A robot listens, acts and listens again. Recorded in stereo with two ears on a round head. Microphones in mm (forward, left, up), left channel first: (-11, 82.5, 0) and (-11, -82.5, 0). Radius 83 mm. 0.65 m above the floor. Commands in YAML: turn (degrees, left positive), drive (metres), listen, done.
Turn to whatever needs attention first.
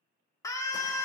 turn: 15
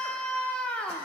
done: "Found it: a scream, straight ahead."